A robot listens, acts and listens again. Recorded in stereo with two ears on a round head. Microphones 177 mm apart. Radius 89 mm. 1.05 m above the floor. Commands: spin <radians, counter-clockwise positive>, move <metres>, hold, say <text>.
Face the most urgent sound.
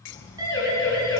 spin -0.35
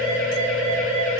spin -2.44
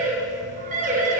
spin -0.70
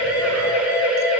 spin -0.17
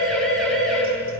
say Facing the siren.